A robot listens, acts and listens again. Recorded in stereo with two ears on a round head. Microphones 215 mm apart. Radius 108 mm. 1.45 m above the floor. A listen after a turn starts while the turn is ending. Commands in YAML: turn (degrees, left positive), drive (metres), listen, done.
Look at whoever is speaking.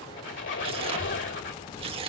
turn: 90
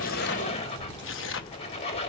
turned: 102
turn: -20
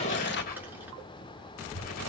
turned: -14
turn: -10
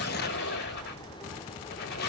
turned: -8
done: "Facing the child speaking, 2 to 4 m away."